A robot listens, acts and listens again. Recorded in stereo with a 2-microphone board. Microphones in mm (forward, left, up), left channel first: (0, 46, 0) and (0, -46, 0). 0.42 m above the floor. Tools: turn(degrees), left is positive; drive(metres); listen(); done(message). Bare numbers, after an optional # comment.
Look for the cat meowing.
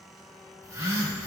listen()
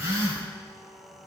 listen()
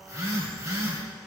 done("I can't make out a cat meowing to turn to.")